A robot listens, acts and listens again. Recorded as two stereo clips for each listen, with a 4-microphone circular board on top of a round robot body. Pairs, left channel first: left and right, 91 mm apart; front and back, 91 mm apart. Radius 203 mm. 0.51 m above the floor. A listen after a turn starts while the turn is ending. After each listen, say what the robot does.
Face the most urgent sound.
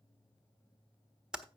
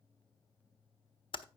Keep listening.
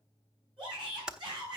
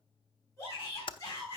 Turn 55° right.
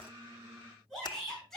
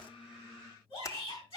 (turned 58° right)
Facing the shout.